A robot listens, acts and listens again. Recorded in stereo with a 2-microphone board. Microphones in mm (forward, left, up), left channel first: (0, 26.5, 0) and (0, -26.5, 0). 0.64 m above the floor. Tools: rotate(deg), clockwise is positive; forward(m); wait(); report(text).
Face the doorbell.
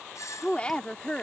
rotate(-90)
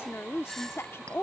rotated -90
rotate(-10)
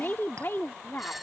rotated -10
report("Found it: a doorbell, straight ahead.")